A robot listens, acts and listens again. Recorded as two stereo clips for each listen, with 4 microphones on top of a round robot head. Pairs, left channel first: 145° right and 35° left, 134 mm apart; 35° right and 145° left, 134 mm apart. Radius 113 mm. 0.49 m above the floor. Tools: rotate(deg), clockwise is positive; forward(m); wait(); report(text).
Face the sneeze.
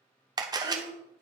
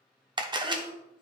rotate(165)
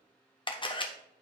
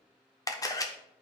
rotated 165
report("I heard a sneeze from this way, but can't make it out now.")